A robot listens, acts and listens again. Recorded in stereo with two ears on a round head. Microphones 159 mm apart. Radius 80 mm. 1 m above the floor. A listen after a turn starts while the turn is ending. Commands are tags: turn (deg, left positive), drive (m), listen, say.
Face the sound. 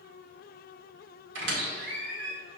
<turn deg="-90"/>
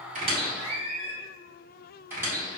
<turn deg="-15"/>
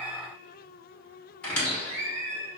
<say>Facing the squeak, 1 to 2 m away.</say>